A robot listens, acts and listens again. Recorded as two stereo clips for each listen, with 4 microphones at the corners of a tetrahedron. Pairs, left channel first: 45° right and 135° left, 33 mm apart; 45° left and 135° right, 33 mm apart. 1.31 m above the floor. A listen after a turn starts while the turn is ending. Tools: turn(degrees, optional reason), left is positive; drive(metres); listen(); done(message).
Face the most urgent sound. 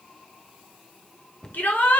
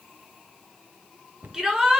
turn(degrees=-60, reason="The shout: 60° right.")
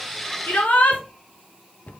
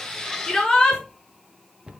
turn(degrees=-25, reason="The shout is now 25° right.")
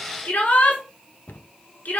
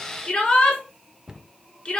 turn(degrees=-15, reason="The shout is now 15° right.")
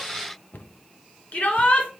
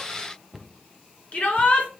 done("Facing the shout.")